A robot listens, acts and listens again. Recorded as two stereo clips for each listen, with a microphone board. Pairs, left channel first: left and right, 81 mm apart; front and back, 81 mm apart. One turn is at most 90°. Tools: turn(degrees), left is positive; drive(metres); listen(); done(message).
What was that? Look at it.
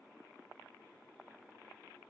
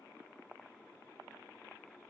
listen()
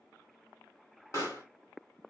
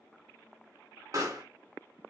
turn(degrees=90)
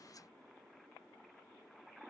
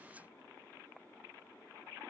turn(degrees=50)
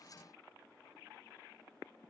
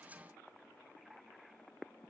done("I heard a pop from this way, but can't make it out now.")